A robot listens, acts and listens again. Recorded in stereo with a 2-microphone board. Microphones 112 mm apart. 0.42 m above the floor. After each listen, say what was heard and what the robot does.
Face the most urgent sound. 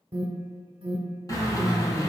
The alarm: about 55° right or 125° right. Turn 55° right.
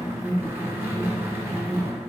So it is at 25° right. Turn 25° right.
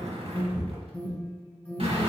The alarm is now 20° left. Turn 20° left.
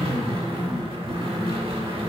Keep listening.
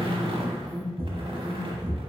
Found it: an alarm, straight ahead.